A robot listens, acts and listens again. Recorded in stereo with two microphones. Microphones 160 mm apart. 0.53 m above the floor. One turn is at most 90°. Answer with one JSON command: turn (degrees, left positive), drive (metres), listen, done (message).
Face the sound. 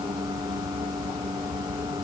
{"listen": true}
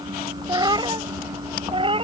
{"turn": -35}
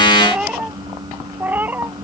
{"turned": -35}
{"turn": -10}
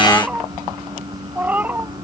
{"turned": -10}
{"turn": -10}
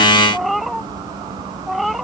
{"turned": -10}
{"done": "Facing the cat meowing."}